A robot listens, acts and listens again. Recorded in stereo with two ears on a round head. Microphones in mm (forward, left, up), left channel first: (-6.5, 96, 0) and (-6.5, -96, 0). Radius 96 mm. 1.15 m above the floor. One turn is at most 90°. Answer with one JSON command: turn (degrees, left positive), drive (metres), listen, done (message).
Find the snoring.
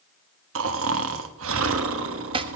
{"turn": -70}
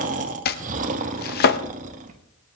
{"turn": -40}
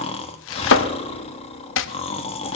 {"turn": 30}
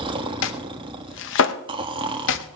{"turn": -25}
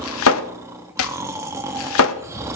{"turn": -15}
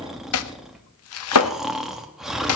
{"done": "Found it: snoring, straight ahead, 1 to 2 m away."}